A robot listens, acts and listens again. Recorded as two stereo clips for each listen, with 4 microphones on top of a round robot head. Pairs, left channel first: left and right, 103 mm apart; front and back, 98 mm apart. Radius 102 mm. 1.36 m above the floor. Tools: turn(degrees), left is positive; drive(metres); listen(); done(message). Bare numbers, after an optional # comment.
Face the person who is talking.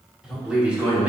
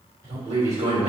# The man speaking: 165° right.
turn(-165)
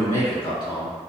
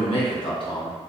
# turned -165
# The man speaking is now 40° left.
turn(40)
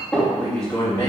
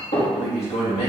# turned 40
# The man speaking is now 20° left.
turn(20)
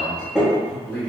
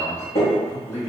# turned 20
# The man speaking is now 10° left.
turn(10)
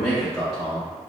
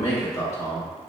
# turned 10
done("Found it: a man speaking, straight ahead, 1 to 2 m away.")